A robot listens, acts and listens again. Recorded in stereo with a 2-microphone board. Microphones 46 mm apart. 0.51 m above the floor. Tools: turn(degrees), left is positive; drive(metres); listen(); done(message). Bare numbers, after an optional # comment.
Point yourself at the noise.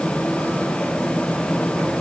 listen()
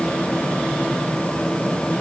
listen()
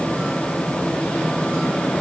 done("I can't make out anything.")